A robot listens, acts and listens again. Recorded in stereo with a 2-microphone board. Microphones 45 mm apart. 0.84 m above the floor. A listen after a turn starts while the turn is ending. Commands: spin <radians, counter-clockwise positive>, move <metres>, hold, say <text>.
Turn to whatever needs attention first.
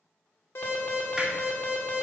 spin 1.05
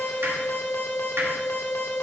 spin 0.96
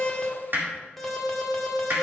say Facing the alarm.